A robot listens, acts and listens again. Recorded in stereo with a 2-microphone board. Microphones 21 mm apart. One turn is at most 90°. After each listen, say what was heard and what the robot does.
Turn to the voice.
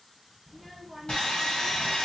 Turn 30° right.
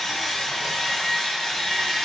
Keep listening.
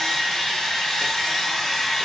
Keep listening.
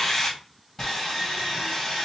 I heard a child speaking, but can't make it out now. It was about 25° left or 145° right.